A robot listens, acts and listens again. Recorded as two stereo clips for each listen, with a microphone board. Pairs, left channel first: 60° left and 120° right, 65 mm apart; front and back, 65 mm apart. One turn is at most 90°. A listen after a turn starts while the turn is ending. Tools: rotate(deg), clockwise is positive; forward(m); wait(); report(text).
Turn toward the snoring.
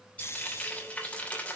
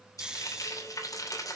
rotate(-90)
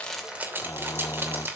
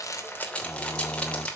rotate(-40)
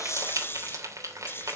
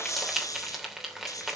rotate(-15)
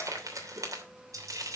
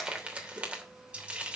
wait()
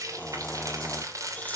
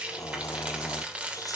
report("Facing the snoring.")